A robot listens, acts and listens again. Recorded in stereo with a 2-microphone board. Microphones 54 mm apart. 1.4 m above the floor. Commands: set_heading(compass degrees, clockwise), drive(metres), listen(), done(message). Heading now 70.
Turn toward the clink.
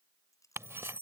set_heading(340)
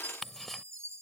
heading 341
listen()
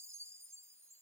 listen()
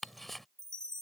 done("I heard a clink from this way, but can't make it out now.")